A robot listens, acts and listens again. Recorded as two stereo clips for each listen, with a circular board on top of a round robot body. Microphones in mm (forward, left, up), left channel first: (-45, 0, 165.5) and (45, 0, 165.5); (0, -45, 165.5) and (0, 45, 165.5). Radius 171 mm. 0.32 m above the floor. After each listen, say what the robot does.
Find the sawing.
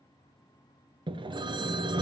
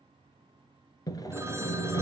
Turn 35° right.
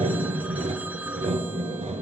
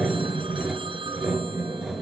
Facing the sawing, 1 to 2 m away.